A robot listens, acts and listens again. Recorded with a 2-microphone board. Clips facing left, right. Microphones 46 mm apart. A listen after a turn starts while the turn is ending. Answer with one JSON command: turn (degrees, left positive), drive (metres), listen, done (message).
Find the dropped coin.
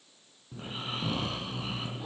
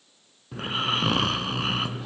{"listen": true}
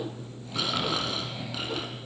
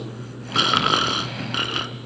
{"listen": true}
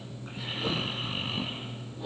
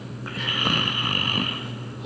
{"done": "I can't make out a dropped coin, only snoring."}